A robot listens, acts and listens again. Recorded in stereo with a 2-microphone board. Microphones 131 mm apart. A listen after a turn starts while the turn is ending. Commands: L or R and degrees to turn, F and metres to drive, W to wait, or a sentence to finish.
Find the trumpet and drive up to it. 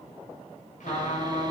L90
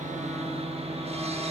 W
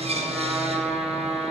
F1.0
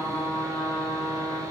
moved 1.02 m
F1.0
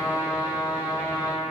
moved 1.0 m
F1.0
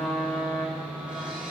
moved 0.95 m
L10
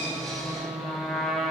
F1.0
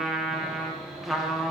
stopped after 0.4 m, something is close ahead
Arrived at the trumpet, straight ahead.